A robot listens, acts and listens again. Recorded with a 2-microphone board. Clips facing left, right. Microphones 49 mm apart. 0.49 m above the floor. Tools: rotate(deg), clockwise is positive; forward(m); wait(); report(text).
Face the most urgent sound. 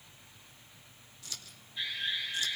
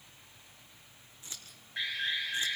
rotate(60)
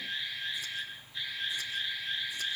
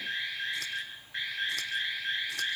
rotate(60)
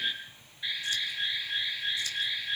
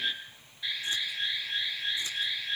rotate(-10)
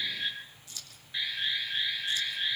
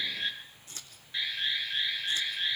report("Found it: an alarm, straight ahead, over 4 m away.")